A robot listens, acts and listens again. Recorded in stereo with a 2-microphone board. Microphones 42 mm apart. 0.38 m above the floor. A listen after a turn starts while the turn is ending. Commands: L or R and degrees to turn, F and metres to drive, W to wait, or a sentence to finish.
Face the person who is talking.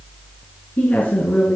L50
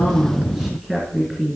Found it: a woman speaking, straight ahead.